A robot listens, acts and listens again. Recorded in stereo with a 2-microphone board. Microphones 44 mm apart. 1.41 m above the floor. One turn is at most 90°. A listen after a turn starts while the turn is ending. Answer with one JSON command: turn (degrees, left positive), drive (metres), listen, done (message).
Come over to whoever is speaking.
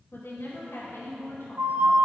{"turn": 90}
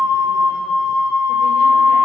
{"listen": true}
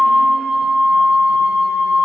{"listen": true}
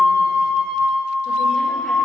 {"done": "I heard a woman speaking from this way, but can't make it out now. I did not reach it."}